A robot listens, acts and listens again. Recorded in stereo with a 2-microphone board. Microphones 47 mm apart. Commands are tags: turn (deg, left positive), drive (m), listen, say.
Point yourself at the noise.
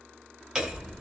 <turn deg="-30"/>
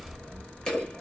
<turn deg="15"/>
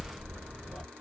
<say>Found it: hammering, straight ahead.</say>